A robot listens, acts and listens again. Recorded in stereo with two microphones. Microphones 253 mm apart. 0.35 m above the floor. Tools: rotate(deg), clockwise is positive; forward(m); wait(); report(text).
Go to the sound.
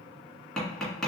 rotate(-30)
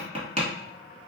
rotate(25)
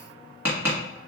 rotate(10)
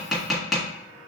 forward(1.0)
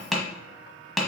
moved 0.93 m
forward(1.0)
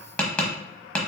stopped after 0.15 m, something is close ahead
report("I am next to the tapping.")